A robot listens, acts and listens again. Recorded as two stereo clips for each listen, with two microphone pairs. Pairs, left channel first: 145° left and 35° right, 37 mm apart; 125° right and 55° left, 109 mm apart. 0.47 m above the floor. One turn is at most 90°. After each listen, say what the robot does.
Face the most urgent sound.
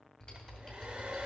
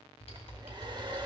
Keep listening.
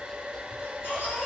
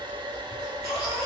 Turn 90° left.
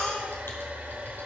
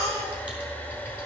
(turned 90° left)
Turn 65° left.
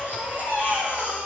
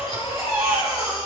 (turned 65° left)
Facing the baby crying, over 4 m away.